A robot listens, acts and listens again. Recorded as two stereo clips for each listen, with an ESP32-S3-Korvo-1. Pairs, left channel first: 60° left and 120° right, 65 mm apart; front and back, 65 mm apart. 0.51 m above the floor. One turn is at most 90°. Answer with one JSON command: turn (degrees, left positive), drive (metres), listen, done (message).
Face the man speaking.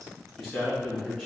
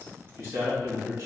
{"turn": 90}
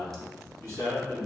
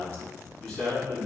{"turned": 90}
{"turn": 85}
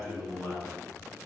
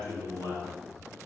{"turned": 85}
{"turn": 25}
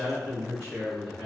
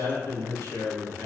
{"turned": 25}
{"done": "Found it: a man speaking, straight ahead, 2 to 4 m away."}